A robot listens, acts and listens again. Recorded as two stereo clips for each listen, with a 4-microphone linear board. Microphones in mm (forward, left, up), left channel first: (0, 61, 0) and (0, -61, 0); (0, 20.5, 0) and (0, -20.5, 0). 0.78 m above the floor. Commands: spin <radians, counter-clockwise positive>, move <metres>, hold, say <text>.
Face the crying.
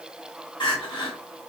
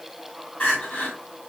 spin 0.70
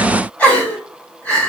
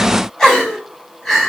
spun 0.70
spin 0.26
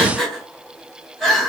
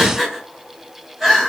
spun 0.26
say Found it: crying, straight ahead.